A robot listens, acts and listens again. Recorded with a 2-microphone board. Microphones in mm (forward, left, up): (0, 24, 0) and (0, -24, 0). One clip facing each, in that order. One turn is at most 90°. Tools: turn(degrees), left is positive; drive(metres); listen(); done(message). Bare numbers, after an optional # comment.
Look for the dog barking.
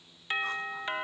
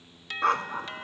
# The dog barking: about 75° right or 105° right.
turn(-75)
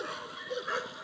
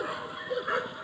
# So it is at 10° right.
turn(-10)
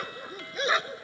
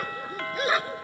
done("Facing the dog barking.")